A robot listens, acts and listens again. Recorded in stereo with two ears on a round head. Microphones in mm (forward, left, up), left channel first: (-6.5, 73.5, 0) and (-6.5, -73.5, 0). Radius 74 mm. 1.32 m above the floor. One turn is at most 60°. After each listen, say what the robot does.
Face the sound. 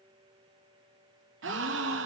Turn 60° right.
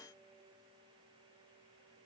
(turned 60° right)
Turn 30° right.
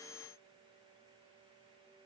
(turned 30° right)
Facing where the gasp came from. I can't hear it now.